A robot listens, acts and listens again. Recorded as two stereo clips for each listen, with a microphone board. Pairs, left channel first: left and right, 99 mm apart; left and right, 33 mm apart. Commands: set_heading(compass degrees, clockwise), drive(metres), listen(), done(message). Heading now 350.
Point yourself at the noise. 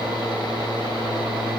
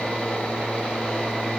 listen()
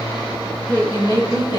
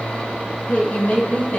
set_heading(305)
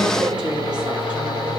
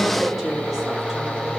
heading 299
set_heading(309)
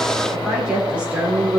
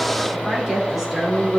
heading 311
set_heading(326)
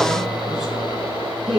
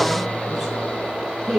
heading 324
done("Facing the woman speaking.")